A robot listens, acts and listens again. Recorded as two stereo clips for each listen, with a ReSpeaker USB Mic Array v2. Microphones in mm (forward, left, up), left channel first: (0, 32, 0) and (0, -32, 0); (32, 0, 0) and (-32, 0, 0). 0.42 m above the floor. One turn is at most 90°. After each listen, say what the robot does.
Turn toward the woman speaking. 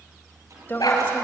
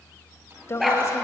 Turn 35° left.
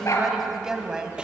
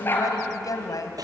Turn 10° right.
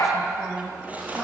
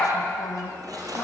Found it: a woman speaking, straight ahead, 2 to 4 m away.